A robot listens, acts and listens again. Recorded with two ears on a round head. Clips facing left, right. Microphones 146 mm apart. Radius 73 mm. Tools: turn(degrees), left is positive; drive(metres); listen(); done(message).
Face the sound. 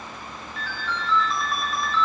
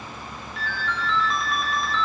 turn(degrees=90)
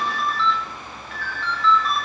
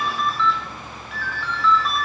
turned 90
done("Facing the ringtone.")